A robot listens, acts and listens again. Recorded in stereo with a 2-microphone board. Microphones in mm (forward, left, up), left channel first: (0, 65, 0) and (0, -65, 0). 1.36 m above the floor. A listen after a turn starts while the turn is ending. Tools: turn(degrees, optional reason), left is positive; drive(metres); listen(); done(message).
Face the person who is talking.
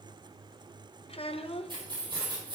turn(degrees=50, reason="The child speaking: about 50° left or 130° left.")
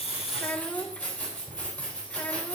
turn(degrees=10, reason="So it is at 10° left.")
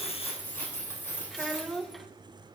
done("Found it: a child speaking, straight ahead.")